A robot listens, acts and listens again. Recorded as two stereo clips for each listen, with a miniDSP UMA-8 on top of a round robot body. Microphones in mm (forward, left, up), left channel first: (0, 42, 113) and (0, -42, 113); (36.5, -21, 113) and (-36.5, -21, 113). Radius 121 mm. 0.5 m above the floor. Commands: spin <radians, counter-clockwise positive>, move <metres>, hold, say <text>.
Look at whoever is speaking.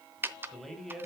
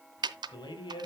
say Found it: a man speaking, straight ahead.